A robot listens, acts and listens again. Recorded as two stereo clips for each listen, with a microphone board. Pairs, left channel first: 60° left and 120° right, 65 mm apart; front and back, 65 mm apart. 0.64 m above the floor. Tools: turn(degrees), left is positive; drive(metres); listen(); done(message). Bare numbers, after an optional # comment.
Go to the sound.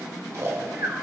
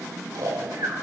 # The snoring: 160° right.
turn(-160)
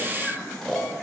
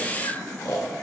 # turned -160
# The snoring is now 15° right.
turn(-15)
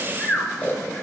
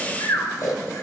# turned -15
drive(1.0)
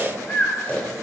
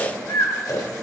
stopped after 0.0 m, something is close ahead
done("Something is in my way. I am facing the snoring but have not reached it.")